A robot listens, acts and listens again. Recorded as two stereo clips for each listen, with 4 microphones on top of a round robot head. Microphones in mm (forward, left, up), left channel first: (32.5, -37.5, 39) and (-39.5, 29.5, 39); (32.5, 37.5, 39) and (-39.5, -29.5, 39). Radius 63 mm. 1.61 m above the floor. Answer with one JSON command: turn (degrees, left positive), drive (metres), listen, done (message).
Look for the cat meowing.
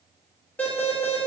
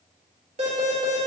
{"listen": true}
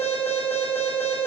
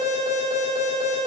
{"listen": true}
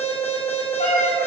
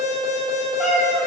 {"turn": -45}
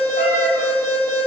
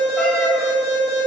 {"listen": true}
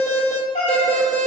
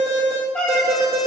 {"turn": -30}
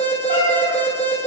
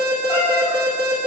{"done": "Found it: a cat meowing, straight ahead."}